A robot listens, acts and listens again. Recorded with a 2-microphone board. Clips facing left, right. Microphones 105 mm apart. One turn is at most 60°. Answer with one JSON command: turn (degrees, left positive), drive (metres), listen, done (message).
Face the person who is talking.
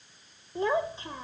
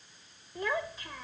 {"turn": 25}
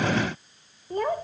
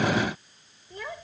{"turn": 60}
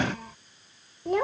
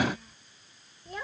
{"turn": 60}
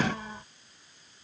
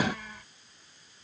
{"turn": 30}
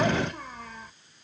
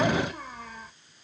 {"done": "Facing the child speaking."}